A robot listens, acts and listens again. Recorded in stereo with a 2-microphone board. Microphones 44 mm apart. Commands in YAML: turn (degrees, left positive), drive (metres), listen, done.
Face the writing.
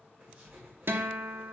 turn: -30
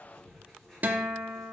done: "Facing the writing."